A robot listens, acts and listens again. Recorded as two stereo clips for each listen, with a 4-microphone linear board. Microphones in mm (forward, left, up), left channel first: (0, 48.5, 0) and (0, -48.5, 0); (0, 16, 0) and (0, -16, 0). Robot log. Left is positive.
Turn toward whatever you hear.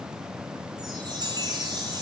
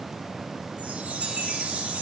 note: The chime: about 45° right or 135° right.
cmd yaw -45
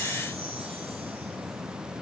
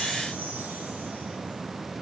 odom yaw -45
cmd idle
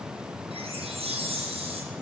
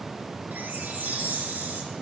note: So it is at 90° right.
cmd yaw -90
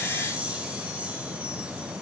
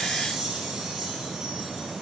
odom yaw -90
note: The chime is now 15° right.
cmd yaw -15
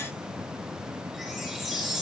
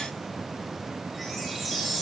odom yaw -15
end: Facing the chime.